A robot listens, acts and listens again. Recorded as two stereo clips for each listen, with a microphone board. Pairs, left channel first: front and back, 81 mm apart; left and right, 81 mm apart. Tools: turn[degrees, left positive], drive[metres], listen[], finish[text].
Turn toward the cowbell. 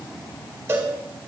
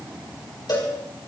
Thought: The cowbell: 120° left.
Action: turn[120]
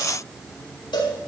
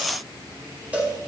Thought: The cowbell is now 20° right.
Action: turn[-20]
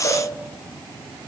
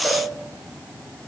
Action: listen[]
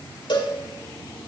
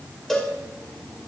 Action: finish[Found it: a cowbell, straight ahead, over 4 m away.]